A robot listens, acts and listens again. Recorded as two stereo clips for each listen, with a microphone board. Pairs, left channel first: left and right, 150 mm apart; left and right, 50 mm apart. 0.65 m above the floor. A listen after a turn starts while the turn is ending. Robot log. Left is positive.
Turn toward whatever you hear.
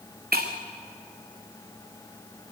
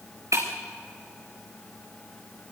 cmd yaw -90
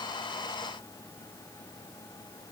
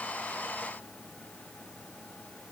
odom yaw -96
end: I heard breaking glass from this way, but can't make it out now.